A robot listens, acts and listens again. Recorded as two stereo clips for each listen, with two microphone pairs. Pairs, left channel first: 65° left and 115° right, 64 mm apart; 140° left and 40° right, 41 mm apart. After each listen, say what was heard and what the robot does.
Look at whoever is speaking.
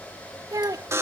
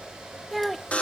The child speaking: 130° right. Turn 130° right.
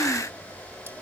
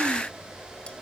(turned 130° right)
Keep listening.
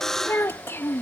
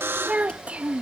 The child speaking is now 15° left. Turn 15° left.
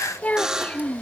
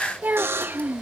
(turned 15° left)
Found it: a child speaking, straight ahead.